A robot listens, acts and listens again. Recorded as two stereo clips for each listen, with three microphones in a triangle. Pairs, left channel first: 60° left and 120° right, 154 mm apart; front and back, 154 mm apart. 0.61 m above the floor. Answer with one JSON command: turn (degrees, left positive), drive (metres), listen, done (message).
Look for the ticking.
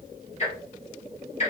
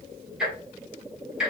{"turn": 95}
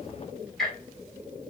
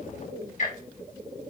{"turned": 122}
{"turn": -30}
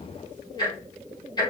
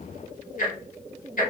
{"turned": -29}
{"done": "Found it: ticking, straight ahead."}